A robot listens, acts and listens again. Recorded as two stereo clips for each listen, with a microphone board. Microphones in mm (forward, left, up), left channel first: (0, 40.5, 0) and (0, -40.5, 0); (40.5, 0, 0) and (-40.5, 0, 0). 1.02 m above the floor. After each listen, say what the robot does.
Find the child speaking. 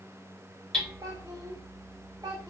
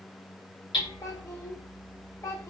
Turn 50° right.
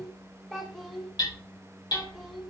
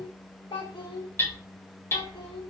Found it: a child speaking, straight ahead, 2 to 4 m away.